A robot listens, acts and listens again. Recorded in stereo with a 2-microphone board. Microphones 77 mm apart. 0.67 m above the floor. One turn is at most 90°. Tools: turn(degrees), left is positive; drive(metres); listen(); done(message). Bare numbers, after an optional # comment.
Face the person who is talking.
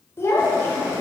# The child speaking: about 35° left or 145° left.
turn(35)
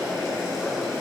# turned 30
listen()
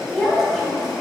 done("Facing the child speaking.")